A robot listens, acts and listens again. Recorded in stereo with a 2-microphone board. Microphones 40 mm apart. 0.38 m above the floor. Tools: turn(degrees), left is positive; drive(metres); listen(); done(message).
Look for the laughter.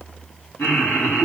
turn(degrees=65)
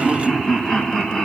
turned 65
turn(degrees=10)
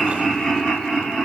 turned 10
done("Facing the laughter.")